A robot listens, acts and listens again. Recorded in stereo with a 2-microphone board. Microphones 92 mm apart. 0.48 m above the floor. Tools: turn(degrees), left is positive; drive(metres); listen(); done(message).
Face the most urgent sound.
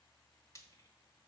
listen()
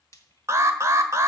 turn(degrees=-35)
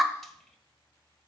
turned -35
done("Found it: an alarm, straight ahead, 1 to 2 m away.")